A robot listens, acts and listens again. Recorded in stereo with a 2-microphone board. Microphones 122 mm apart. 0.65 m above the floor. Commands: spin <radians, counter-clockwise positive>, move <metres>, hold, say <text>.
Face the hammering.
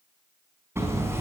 spin -0.35
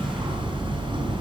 spin -2.36
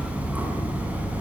spin -0.17
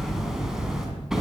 say Facing the hammering.